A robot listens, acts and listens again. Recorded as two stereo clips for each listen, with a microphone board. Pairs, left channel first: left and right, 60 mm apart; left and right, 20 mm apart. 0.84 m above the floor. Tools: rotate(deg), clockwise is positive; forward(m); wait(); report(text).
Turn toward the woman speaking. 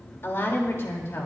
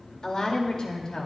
rotate(-45)
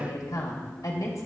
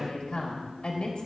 rotate(-80)
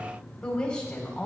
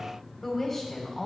rotate(-15)
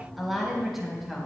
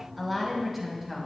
report("Facing the woman speaking, over 4 m away.")